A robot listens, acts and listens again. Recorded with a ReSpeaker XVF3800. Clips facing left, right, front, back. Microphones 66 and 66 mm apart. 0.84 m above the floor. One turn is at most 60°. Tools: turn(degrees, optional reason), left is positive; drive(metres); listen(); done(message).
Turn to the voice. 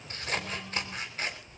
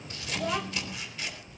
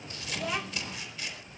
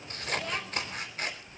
turn(degrees=-60, reason="The child speaking: 80° right.")
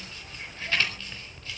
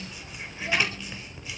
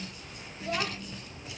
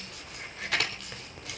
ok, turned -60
turn(degrees=-20, reason="Nothing new. It was at 20° right.")
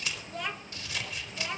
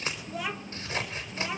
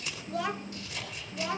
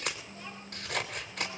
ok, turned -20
done("Found it: a child speaking, straight ahead, under 1 m away.")